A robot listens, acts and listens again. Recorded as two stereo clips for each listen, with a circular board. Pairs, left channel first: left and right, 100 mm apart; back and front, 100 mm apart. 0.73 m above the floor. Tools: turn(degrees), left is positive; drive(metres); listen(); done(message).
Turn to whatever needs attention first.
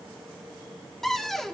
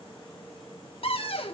listen()
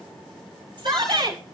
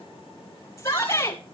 turn(degrees=-120)
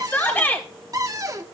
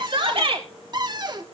turn(degrees=20)
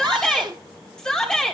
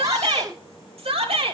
turn(degrees=10)
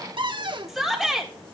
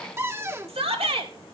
done("Found it: a shout, straight ahead, 2 to 4 m away.")